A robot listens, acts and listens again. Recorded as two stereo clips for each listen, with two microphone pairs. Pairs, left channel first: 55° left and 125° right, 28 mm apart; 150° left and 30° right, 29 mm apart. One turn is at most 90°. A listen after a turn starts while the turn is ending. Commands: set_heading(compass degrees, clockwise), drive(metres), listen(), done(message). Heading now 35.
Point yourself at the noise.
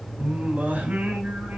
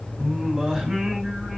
set_heading(125)
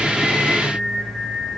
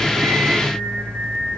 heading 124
done("Facing the singing, over 4 m away.")